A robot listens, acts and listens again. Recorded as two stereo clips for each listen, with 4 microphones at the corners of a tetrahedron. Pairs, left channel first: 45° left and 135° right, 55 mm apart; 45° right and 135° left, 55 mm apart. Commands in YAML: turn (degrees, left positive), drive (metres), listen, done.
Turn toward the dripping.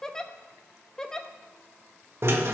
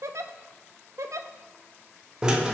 listen: true
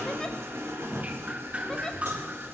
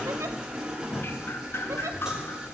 turn: -75
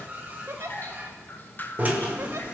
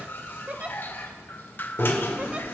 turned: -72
done: "Facing the dripping, under 1 m away."